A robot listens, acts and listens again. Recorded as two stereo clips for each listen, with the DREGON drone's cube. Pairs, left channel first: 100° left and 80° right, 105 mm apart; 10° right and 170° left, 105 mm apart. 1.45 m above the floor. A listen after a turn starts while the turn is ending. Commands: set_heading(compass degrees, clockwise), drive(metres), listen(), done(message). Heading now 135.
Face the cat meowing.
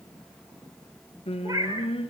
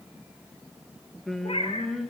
set_heading(160)
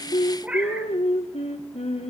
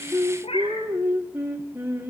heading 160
done("Facing the cat meowing, 2 to 4 m away.")